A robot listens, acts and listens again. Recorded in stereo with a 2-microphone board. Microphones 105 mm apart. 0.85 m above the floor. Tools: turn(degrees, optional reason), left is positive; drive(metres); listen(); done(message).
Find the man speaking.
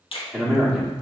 turn(degrees=30)
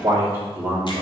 turn(degrees=-15, reason="So it is at 15° right.")
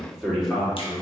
done("Facing the man speaking.")